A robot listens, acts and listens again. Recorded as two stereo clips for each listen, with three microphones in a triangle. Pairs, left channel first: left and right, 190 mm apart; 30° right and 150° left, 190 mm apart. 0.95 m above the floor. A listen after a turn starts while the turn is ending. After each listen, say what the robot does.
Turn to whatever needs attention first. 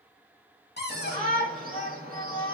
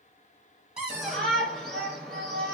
Turn 115° right.
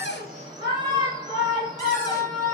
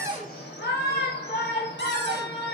Turn 25° right.
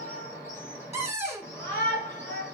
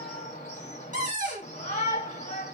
Turn 15° left.
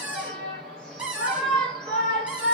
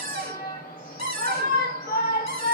Facing the shout.